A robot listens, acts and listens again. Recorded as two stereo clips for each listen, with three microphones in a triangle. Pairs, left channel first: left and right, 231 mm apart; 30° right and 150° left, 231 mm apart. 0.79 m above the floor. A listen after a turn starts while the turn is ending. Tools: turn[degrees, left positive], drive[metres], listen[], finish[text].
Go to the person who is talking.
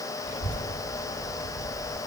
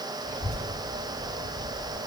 Thought: The child speaking: 30° left.
Action: turn[30]
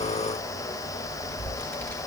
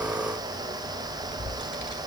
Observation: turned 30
Action: drive[1.0]
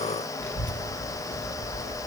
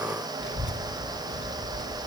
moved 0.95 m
Action: drive[1.0]
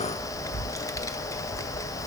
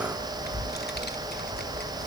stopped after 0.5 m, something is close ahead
Thought: The child speaking is now 15° left.
Action: turn[15]
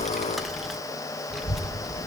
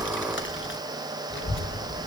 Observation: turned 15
Action: finish[I am next to the child speaking.]